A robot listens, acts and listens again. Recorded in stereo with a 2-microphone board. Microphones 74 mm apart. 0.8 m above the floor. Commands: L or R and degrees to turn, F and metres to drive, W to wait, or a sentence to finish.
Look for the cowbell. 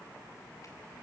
W
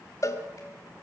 L50
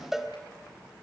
Facing the cowbell, 1 to 2 m away.